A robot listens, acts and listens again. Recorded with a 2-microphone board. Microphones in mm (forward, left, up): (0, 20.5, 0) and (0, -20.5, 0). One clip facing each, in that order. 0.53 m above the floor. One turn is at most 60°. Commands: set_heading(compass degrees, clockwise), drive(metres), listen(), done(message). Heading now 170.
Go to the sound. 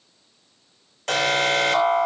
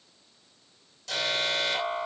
set_heading(120)
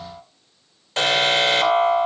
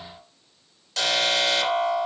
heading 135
set_heading(105)
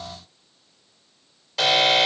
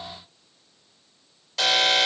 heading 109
drive(1.0)
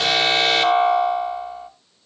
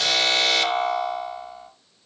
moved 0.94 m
set_heading(94)
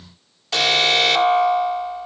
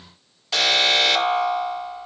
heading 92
drive(1.0)
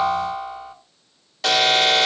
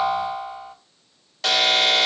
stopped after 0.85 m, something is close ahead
done("I am next to the alarm.")